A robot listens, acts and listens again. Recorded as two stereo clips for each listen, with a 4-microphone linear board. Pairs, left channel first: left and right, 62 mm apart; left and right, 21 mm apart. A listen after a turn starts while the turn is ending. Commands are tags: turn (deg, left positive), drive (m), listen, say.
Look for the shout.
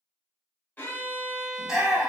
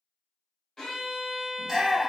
<turn deg="-30"/>
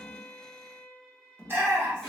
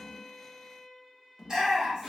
<turn deg="-140"/>
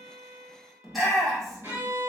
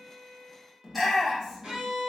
<say>Facing the shout, 1 to 2 m away.</say>